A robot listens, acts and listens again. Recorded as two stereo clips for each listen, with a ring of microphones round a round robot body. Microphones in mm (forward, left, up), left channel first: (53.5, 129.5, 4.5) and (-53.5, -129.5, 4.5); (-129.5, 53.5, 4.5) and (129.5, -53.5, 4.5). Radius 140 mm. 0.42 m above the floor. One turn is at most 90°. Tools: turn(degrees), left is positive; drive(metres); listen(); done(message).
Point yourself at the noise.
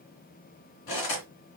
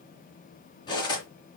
turn(degrees=80)
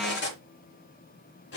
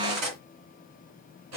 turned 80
turn(degrees=15)
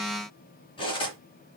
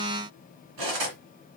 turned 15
done("Found it: cutlery clinking, straight ahead.")